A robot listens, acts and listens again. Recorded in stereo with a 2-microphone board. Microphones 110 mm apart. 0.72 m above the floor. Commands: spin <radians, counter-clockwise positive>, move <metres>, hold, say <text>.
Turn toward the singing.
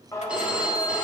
spin 0.52
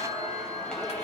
spin 0.17
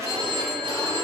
hold
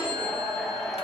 spin 0.17
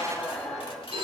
say Facing the singing.